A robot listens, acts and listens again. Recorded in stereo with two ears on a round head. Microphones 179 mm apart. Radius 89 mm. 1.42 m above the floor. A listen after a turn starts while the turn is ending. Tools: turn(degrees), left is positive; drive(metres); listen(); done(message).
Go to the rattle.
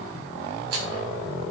turn(degrees=-90)
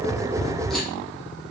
listen()
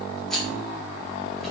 drive(metres=1.0)
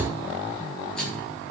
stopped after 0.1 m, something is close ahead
done("Blocked. The rattle is further on, straight ahead.")